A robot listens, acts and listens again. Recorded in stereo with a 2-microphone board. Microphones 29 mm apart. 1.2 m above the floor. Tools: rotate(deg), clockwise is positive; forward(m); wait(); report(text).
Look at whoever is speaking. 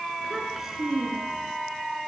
rotate(30)
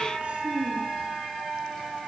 rotate(135)
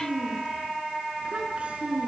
rotate(45)
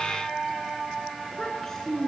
rotate(-15)
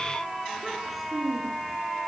report("Found it: a child speaking, straight ahead.")